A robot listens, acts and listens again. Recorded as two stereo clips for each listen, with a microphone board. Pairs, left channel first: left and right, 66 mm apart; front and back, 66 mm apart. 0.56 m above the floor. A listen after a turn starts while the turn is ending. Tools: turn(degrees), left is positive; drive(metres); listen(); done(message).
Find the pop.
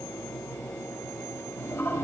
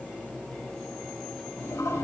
listen()
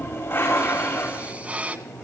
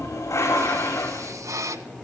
turn(degrees=-155)
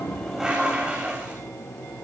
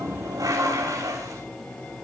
done("Facing where the pop came from. I can't hear it now.")